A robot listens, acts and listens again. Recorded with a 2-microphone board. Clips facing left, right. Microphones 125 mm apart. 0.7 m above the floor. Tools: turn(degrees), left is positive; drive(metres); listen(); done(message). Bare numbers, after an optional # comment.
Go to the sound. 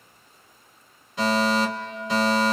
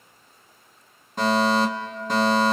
# The fire alarm: about 45° right or 135° right.
turn(-45)
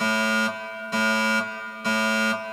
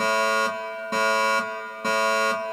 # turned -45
# So it is at 80° right.
turn(-80)
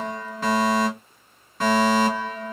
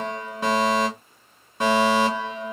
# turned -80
# The fire alarm is now 20° right.
turn(-20)
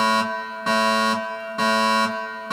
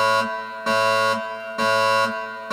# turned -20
drive(1.0)
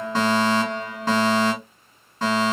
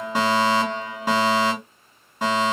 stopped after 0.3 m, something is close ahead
# The fire alarm is now 15° right.
turn(-15)
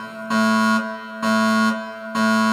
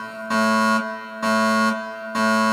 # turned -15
done("Blocked. The fire alarm is further on, straight ahead.")